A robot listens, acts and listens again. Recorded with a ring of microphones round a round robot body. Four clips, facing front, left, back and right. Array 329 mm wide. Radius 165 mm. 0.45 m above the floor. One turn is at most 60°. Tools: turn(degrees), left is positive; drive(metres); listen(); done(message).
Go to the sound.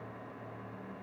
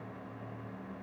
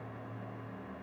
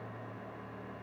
listen()
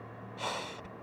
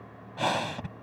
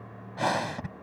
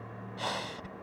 turn(degrees=60)
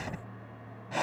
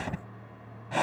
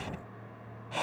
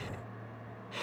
turn(degrees=60)
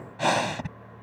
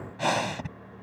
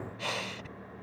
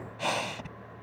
turn(degrees=20)
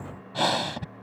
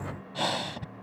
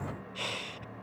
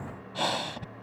drive(metres=1.0)
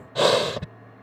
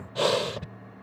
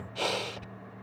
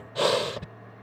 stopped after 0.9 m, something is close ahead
done("Arrived at the breathing, straight ahead.")